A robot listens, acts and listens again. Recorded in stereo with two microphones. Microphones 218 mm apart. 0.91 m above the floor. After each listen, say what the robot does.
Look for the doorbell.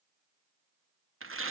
Keep listening.
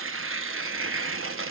Keep listening.
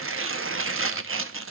I can't make out a doorbell, only tearing paper.